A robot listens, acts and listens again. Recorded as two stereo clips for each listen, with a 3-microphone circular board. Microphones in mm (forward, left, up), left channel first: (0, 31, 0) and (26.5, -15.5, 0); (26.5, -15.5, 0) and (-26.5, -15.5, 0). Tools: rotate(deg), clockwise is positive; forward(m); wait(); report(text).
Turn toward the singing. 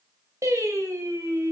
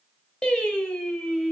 rotate(75)
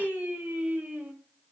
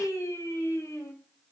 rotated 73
report("Found it: singing, straight ahead.")